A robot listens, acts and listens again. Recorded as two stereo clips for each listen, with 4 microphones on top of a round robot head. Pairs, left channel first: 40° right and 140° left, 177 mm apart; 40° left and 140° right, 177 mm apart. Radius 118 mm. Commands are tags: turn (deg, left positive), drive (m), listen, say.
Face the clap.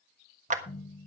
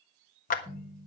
<turn deg="90"/>
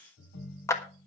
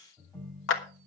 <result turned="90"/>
<turn deg="35"/>
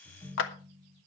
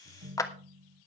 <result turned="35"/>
<turn deg="-30"/>
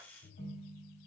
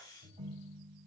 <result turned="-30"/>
<listen/>
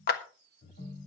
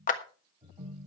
<say>Found it: a clap, straight ahead.</say>